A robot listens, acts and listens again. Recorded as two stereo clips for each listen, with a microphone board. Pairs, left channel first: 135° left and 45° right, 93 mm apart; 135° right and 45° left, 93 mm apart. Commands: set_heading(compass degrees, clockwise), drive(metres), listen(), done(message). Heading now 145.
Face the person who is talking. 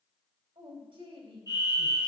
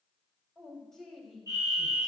set_heading(195)
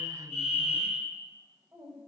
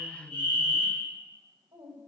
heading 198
done("Facing the woman speaking.")